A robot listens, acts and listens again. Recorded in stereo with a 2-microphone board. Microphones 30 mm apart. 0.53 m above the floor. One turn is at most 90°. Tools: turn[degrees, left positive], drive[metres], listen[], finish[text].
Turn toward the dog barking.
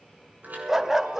Thought: The dog barking: about 20° right or 160° right.
Action: turn[-20]
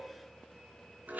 Action: listen[]
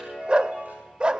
Thought: So it is at 140° right.
Action: turn[-90]
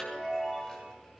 Thought: Nothing new. It was at 50° right.
Action: turn[-50]
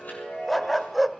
Action: finish[Facing the dog barking.]